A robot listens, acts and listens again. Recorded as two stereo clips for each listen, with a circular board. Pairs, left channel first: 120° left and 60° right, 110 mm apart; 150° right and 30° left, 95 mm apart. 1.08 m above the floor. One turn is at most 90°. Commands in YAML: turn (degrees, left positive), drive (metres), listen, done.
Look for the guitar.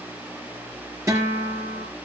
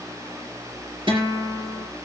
done: "Facing the guitar, over 4 m away."